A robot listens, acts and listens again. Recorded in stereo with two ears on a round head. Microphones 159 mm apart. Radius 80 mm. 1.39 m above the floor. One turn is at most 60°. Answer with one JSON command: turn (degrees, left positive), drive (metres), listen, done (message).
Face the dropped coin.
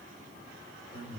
{"listen": true}
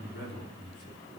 {"listen": true}
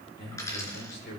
{"turn": 20}
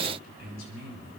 {"listen": true}
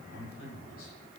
{"done": "I heard a dropped coin, but can't make it out now. It was about straight ahead or 140° left."}